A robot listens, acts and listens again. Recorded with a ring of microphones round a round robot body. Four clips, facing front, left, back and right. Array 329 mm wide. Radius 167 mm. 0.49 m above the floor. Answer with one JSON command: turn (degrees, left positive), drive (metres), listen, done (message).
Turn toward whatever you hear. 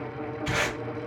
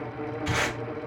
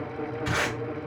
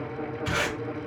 {"turn": -150}
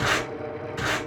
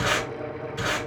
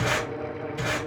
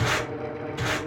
{"turn": 20}
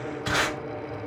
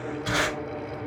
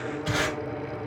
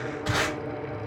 {"done": "Facing the tape being pulled, 1 to 2 m away."}